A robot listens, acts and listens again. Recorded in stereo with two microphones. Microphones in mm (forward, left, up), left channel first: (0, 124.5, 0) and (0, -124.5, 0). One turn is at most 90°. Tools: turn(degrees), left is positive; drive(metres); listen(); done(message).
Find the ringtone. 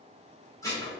listen()
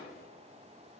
listen()
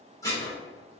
done("I can't make out a ringtone, only dishes clattering.")